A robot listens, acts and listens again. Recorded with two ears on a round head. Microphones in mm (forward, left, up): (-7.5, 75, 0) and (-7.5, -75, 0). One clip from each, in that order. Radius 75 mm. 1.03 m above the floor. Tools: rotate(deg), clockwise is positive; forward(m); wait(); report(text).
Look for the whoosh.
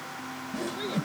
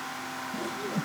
rotate(-20)
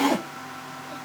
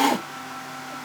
rotate(-140)
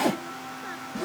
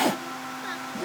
report("Facing the whoosh.")